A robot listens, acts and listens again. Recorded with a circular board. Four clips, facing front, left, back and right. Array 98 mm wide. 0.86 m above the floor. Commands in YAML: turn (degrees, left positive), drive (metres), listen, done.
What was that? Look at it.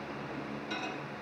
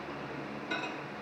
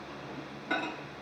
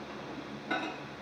turn: -145
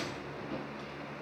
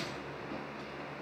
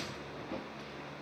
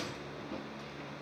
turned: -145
listen: true
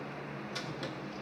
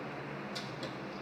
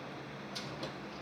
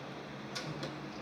listen: true
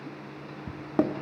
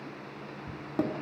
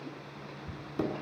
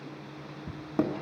done: "Found it: a microwave, straight ahead."